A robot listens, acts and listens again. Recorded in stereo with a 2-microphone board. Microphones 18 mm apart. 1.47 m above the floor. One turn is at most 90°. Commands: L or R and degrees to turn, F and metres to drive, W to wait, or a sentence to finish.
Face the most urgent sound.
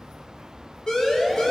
L40
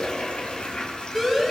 Found it: a siren, straight ahead, over 4 m away.